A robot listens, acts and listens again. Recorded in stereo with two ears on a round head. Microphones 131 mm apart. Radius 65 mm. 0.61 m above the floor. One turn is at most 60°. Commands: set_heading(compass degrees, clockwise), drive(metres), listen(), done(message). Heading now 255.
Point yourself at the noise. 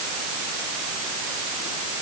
listen()
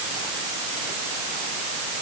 listen()
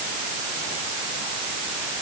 done("I can't make out anything to turn to.")